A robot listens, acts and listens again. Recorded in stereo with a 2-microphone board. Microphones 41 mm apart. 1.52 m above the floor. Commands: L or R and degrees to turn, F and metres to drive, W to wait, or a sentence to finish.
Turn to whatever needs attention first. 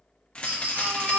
R45
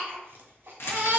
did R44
R80
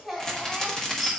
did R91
L10
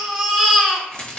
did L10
Facing the baby crying.